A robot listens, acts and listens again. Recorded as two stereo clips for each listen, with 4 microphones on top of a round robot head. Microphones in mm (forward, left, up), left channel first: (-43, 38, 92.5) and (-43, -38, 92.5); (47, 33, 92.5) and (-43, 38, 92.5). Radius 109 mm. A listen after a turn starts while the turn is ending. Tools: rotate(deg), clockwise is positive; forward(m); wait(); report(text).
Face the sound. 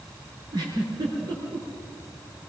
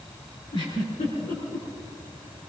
rotate(45)
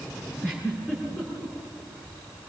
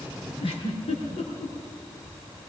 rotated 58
rotate(-15)
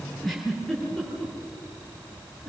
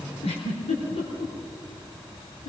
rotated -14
report("Found it: a giggle, straight ahead, over 4 m away.")